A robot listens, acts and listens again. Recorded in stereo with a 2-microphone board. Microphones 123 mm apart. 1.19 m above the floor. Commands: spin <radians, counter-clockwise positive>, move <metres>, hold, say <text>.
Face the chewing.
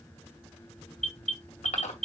spin 1.22
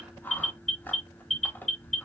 spin 0.26
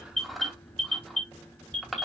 say Facing the chewing.